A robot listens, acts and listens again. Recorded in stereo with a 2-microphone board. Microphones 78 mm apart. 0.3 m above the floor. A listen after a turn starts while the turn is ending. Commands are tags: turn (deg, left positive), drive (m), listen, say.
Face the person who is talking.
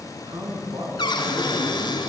<turn deg="-65"/>
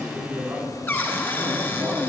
<turn deg="-35"/>
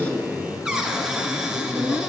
<say>Found it: a man speaking, straight ahead.</say>